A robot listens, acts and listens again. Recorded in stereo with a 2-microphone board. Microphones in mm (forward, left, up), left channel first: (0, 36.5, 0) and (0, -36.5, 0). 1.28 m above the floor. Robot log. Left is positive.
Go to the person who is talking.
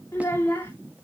note: The child speaking: about 35° left or 145° left.
cmd yaw +35
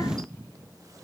cmd idle
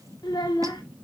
note: So it is at 110° left.
cmd yaw +110
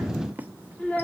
note: The child speaking is now 20° left.
cmd yaw +20
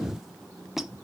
cmd idle
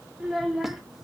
cmd fwd 1.0
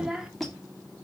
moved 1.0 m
note: The child speaking is now 10° right.
cmd yaw -10
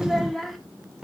cmd fwd 1.0
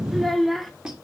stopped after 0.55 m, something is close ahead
end: I am next to the child speaking.